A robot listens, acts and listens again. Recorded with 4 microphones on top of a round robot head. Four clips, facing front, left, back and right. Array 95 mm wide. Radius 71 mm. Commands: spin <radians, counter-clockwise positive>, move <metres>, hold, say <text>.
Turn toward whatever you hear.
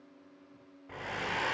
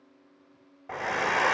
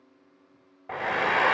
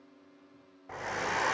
spin 2.71
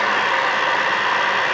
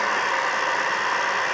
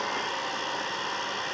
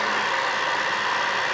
spin 0.17
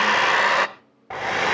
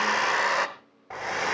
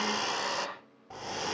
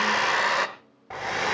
say Facing the hair dryer.